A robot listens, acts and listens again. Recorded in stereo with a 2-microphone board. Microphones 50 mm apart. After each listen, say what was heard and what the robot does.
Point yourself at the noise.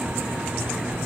Keep listening.
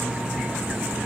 Keep listening.
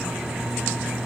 I can't make out anything.